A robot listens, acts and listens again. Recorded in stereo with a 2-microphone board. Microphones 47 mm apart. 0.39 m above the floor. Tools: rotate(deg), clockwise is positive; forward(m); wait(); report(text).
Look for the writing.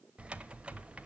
wait()
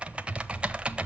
wait()
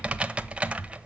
report("I can't make out writing, only typing on a keyboard.")